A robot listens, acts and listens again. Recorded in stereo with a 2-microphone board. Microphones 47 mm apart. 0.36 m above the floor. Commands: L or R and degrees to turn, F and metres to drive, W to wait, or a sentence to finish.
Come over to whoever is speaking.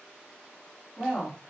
L30
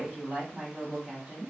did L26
R30
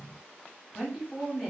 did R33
F1.0
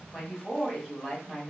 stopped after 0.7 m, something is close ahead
L15
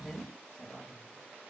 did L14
Arrived at the woman speaking, straight ahead.